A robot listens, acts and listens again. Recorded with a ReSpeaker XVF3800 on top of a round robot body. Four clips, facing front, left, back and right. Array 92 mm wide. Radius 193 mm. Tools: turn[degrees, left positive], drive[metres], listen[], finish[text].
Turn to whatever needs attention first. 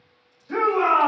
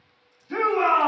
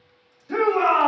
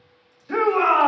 Thought: The shout: 105° right.
Action: turn[-105]
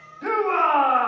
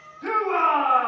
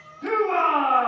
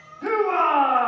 Thought: The shout is now 40° right.
Action: turn[-40]
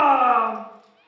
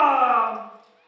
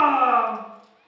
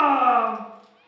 Thought: The shout is now 15° left.
Action: turn[15]
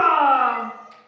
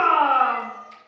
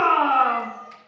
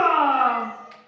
Action: finish[Facing the shout.]